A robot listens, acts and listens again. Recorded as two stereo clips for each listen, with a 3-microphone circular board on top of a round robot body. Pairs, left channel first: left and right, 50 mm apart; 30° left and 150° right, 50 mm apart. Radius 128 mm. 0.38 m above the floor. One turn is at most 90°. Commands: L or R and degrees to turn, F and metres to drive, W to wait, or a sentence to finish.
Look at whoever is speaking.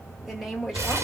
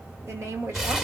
R90
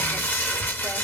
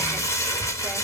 R85
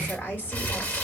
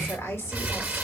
L45
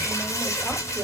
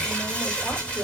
R10
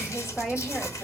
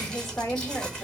Found it: a woman speaking, straight ahead, 1 to 2 m away.